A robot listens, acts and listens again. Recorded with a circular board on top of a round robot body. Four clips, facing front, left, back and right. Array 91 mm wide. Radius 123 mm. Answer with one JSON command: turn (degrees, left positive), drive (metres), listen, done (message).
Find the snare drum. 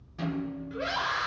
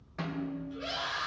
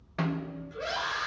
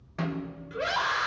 {"turn": -165}
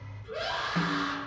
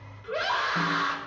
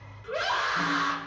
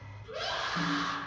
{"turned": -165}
{"listen": true}
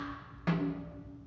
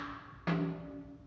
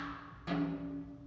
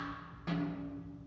{"turn": 40}
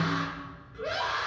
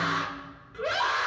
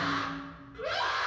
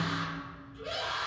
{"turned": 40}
{"listen": true}
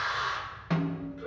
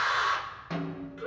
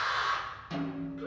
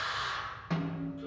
{"done": "Found it: a snare drum, straight ahead."}